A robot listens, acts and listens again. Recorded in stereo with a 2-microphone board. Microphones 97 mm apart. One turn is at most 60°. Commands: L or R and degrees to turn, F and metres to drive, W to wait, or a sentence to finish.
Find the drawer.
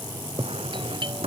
R60
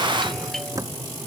R35
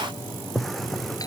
Found it: a drawer, straight ahead.